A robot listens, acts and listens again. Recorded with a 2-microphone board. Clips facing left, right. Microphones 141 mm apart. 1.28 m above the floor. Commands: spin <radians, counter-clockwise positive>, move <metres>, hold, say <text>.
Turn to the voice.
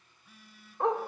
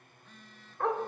hold
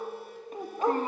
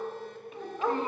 spin 0.70
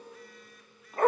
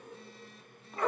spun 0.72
hold
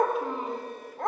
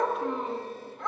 hold
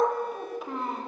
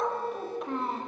say Facing the child speaking.